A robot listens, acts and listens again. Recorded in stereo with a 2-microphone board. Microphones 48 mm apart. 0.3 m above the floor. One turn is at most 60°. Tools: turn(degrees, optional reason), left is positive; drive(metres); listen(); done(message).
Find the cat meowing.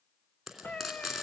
turn(degrees=25, reason="The cat meowing: about 25° left or 155° left.")
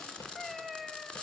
done("Facing the cat meowing.")